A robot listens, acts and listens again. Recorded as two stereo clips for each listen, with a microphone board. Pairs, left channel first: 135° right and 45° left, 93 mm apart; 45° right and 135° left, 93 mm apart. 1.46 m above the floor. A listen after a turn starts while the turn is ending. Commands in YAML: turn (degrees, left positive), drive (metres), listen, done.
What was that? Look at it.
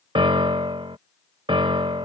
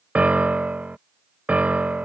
turn: 60
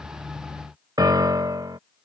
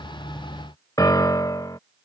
done: "Found it: a piano, straight ahead."